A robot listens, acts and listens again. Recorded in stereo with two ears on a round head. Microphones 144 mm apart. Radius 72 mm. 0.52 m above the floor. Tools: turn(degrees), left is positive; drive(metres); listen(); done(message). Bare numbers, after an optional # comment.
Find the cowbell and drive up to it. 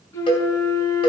# The cowbell: about 35° left or 145° left.
turn(35)
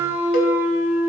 listen()
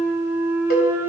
listen()
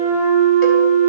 done("I heard a cowbell, but can't make it out now. It was about straight ahead or 110° left. I did not reach it.")